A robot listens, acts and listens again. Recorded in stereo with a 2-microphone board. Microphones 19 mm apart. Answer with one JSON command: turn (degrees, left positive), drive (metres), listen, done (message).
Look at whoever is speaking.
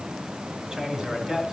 {"turn": -40}
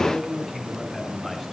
{"done": "Facing the man speaking."}